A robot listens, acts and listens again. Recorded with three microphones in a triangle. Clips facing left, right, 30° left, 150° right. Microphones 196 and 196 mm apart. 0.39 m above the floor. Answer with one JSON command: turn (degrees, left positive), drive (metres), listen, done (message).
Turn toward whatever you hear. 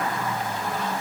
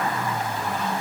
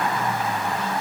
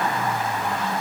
{"listen": true}
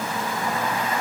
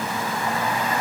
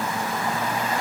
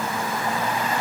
{"listen": true}
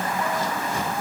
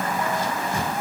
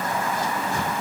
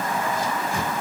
{"done": "I can't make out anything to turn to."}